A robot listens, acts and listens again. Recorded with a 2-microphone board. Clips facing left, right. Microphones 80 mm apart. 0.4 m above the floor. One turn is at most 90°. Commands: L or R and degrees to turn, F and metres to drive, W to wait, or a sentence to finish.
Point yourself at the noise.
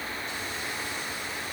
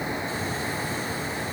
W
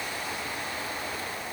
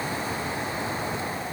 W
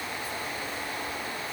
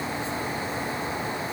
I can't make out anything to turn to.